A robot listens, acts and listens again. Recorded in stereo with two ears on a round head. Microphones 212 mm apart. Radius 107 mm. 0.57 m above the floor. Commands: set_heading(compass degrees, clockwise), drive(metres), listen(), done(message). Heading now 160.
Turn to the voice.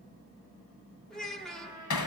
set_heading(130)
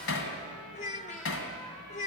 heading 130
set_heading(340)
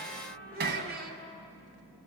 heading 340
set_heading(20)
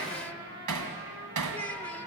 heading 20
set_heading(10)
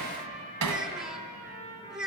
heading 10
done("Facing the child speaking, 1 to 2 m away.")